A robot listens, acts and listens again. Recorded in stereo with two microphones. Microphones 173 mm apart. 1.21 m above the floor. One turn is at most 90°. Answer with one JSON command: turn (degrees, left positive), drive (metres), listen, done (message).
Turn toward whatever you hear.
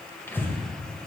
{"turn": 30}
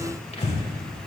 {"turn": 90}
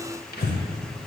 {"turn": 80}
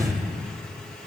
{"done": "Found it: breathing, straight ahead."}